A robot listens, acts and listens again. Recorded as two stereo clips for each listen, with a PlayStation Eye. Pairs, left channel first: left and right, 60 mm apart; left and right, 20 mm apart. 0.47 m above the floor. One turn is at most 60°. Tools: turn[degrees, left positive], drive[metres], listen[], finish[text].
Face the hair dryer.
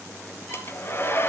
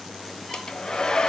Thought: The hair dryer: about 40° left or 140° left.
Action: turn[40]
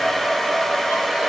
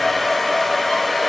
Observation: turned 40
Action: finish[Found it: a hair dryer, straight ahead.]